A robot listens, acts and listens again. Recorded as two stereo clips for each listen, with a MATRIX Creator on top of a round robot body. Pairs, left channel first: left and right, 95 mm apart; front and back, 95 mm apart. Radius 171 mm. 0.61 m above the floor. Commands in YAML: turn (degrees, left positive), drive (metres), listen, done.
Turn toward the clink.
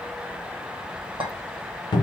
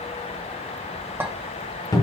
turn: -110
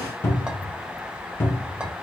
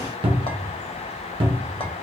listen: true
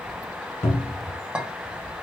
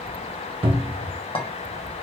turn: -10
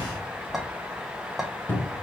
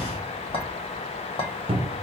done: "Facing the clink, 1 to 2 m away."